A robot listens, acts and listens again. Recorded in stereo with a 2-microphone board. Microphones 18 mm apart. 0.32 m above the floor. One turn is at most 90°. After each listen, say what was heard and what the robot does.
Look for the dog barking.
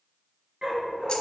The dog barking: about 55° right or 125° right. Turn 55° right.
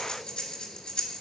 Keep listening.
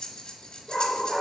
So it is at 25° right. Turn 25° right.
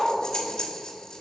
The dog barking is now 20° right. Turn 20° right.
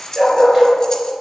The dog barking is now 25° right. Turn 25° right.
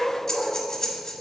The dog barking is now 25° right. Turn 25° right.
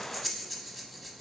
Keep listening.
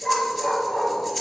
The dog barking is now 10° left. Turn 10° left.
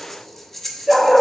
Found it: a dog barking, straight ahead, 2 to 4 m away.